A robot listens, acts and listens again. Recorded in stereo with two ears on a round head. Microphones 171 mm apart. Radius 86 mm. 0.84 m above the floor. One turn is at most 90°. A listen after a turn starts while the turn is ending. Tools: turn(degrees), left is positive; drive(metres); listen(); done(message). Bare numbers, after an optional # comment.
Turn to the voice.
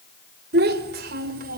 # The child speaking: about 50° right or 130° right.
turn(-50)
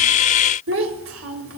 # So it is at 80° right.
turn(-80)
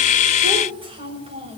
# The child speaking is now 30° right.
turn(-30)
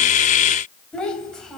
done("Found it: a child speaking, straight ahead, over 4 m away.")